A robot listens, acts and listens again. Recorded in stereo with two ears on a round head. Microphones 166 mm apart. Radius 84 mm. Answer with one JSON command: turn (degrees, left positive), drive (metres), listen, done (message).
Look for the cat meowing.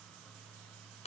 {"listen": true}
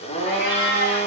{"turn": 60}
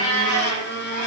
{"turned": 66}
{"turn": 40}
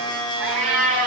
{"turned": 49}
{"done": "Found it: a cat meowing, straight ahead."}